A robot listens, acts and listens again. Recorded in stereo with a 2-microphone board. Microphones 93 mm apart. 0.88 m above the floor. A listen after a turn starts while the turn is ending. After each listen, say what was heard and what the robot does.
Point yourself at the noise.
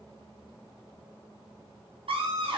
Turn 90° right.
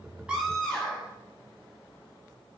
Facing the scream.